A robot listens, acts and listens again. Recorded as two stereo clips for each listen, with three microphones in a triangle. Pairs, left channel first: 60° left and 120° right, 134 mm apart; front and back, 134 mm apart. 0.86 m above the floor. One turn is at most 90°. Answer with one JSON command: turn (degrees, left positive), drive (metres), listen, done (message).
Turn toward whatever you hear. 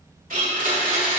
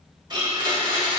{"turn": -90}
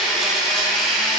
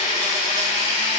{"turn": -30}
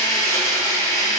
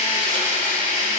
{"done": "Found it: a blender, straight ahead."}